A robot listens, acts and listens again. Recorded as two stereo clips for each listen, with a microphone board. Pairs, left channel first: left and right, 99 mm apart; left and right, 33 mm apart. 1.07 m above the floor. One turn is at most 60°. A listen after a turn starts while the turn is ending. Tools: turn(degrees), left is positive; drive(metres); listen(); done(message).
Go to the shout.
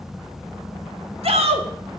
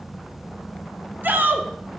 turn(degrees=-60)
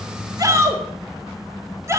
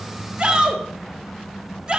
turn(degrees=-30)
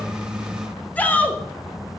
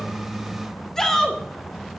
turn(degrees=15)
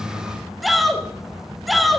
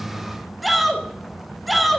drive(metres=1.0)
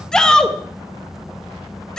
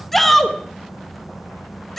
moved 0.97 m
drive(metres=1.0)
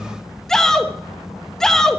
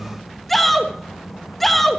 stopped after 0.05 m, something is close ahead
done("Arrived at the shout, straight ahead.")